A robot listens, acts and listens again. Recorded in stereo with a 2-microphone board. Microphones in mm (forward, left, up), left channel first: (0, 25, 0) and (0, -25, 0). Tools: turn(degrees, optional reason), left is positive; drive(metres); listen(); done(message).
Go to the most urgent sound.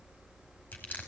listen()
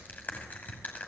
listen()
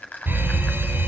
turn(degrees=-45, reason="The fire alarm: about 45° right or 135° right.")
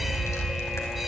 drive(metres=1.0)
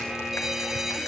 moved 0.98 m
turn(degrees=-10, reason="The fire alarm is now 10° right.")
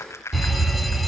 drive(metres=1.0)
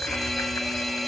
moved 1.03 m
drive(metres=1.0)
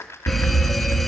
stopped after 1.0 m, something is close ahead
done("I am next to the fire alarm.")